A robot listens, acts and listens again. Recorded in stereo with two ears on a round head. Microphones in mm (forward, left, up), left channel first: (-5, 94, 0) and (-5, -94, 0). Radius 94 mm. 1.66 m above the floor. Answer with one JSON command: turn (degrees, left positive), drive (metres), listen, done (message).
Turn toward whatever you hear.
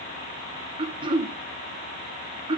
{"turn": -25}
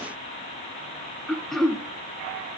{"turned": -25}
{"done": "Found it: throat clearing, straight ahead, 1 to 2 m away."}